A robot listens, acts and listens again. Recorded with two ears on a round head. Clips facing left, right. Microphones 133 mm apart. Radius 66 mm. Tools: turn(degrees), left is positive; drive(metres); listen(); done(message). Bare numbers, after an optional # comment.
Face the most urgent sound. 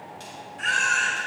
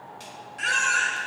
turn(-90)
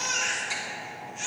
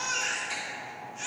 done("Facing the baby crying, 2 to 4 m away.")